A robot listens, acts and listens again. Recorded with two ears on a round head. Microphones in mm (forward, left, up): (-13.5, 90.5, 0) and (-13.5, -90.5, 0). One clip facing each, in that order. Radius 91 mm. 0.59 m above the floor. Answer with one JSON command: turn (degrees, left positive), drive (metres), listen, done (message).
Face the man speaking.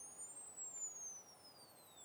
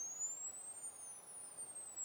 {"listen": true}
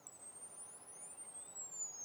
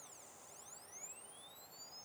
{"listen": true}
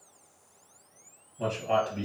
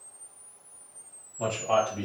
{"turn": 25}
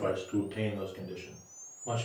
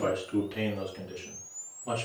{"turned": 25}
{"done": "Found it: a man speaking, straight ahead, over 4 m away."}